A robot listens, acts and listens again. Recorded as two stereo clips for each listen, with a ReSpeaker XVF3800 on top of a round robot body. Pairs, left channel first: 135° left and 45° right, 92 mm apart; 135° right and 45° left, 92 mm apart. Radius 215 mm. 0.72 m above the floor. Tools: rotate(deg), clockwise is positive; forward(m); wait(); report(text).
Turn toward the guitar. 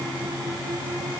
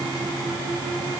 wait()
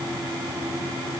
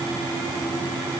wait()
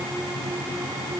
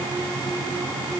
report("I can't make out a guitar to turn to.")